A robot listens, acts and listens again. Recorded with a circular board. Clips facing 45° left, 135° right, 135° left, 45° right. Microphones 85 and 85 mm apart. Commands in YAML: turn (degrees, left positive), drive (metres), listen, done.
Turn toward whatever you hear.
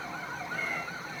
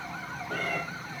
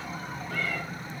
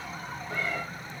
turn: -115
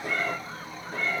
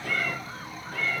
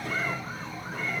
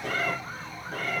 turn: -20
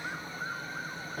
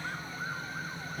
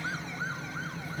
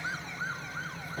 listen: true
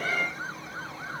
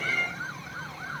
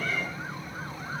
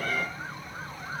done: "Found it: a cat meowing, straight ahead, over 4 m away."